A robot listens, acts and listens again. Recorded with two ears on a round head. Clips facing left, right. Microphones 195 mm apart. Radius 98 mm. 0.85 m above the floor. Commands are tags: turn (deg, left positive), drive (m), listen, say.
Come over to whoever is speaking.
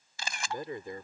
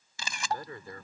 <turn deg="20"/>
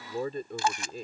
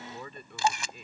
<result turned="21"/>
<turn deg="140"/>
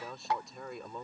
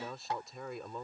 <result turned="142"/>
<drive m="1.0"/>
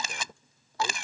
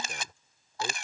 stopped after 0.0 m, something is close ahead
<listen/>
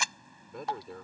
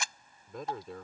<say>Something is in my way. I am facing the man speaking but have not reached it.</say>